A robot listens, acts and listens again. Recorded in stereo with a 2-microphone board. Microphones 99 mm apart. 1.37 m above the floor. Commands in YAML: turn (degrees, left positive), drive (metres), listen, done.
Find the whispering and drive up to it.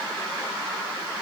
listen: true
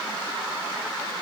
listen: true
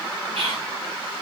turn: -75
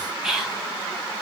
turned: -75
drive: 1.0
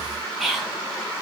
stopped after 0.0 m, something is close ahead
done: "Blocked. The whispering is further on, straight ahead."